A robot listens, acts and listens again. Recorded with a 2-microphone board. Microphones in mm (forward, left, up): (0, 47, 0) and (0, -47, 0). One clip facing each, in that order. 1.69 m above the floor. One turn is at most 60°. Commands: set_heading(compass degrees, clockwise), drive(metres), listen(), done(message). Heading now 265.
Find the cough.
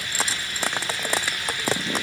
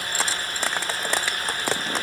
listen()
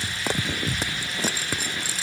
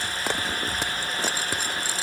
listen()
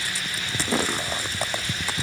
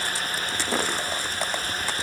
done("I can't make out a cough to turn to.")